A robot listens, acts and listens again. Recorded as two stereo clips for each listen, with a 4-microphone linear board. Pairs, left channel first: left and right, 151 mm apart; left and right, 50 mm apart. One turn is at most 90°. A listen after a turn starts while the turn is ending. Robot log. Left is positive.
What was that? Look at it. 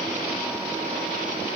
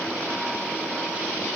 cmd idle
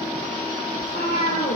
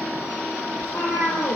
cmd yaw +90
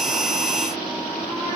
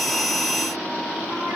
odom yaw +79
note: Nothing new. It was at 10° left.
cmd yaw +10
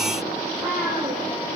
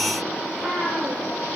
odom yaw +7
note: The cat meowing is now 15° right.
cmd yaw -15
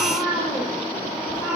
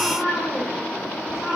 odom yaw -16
end: Facing the cat meowing.